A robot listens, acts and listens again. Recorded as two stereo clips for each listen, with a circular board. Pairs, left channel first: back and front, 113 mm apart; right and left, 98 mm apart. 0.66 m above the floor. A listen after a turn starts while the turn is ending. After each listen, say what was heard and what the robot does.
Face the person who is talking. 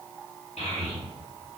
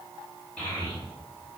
The child speaking: 170° right. Turn 170° right.
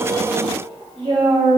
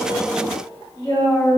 The child speaking is now 30° right. Turn 30° right.
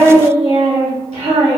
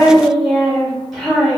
Found it: a child speaking, straight ahead, 1 to 2 m away.